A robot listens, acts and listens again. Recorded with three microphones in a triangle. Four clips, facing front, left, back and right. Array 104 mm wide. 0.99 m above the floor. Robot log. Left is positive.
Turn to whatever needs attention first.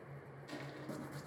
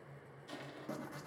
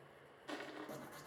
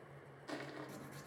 cmd idle
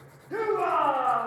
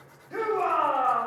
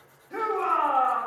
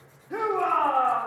note: The shout: 70° right.
cmd yaw -70
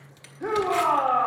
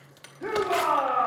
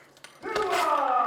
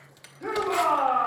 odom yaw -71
end: Facing the shout.